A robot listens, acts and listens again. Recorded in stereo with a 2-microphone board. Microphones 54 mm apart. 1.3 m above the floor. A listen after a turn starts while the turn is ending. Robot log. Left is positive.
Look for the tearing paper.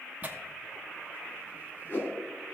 note: The tearing paper: about 30° right or 150° right.
cmd yaw -30
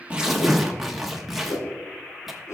end: Found it: tearing paper, straight ahead.